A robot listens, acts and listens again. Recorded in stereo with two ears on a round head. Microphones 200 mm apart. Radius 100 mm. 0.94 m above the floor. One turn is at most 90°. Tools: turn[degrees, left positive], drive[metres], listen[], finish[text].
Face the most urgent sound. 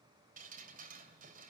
Action: listen[]
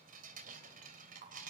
Action: listen[]
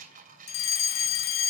Thought: The fire alarm: about 60° left or 120° left.
Action: turn[60]
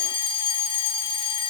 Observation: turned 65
Thought: So it is at 25° left.
Action: turn[25]
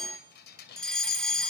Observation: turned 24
Action: finish[Facing the fire alarm, 2 to 4 m away.]